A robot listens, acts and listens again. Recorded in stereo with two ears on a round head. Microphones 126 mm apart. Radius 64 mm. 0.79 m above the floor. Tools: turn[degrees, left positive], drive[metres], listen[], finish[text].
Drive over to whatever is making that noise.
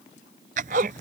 Thought: The zipper: about 55° right or 125° right.
Action: turn[-55]
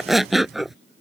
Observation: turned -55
Action: drive[1.0]
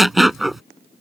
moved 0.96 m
Action: drive[1.0]
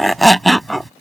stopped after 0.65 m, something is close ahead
Action: finish[I am next to the zipper.]